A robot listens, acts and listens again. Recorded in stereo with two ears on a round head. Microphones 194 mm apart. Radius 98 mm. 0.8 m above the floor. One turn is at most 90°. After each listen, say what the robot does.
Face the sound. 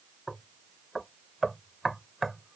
Turn 30° left.
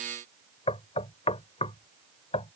Turn 90° left.
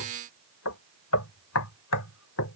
Turn 80° left.
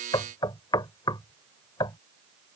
Turn 20° left.
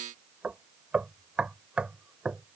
Facing the knocking.